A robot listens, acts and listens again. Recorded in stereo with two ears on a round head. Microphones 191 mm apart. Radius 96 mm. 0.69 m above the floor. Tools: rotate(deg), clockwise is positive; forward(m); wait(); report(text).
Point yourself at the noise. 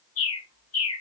rotate(-70)
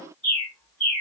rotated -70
report("Found it: a bird, straight ahead, over 4 m away.")